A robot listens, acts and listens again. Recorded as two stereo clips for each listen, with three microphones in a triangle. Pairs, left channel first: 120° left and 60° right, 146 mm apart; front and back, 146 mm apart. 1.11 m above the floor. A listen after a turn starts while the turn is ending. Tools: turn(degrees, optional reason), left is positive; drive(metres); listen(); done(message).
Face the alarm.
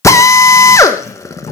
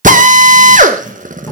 listen()
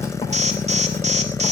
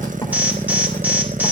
turn(degrees=-100, reason="The alarm: 100° right.")
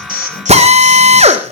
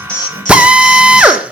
listen()
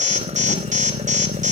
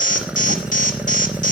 turn(degrees=-30, reason="The alarm is now 30° right.")
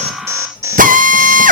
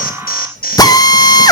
turn(degrees=10, reason="The alarm is now 10° left.")
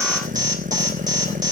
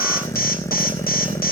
done("Facing the alarm, 2 to 4 m away.")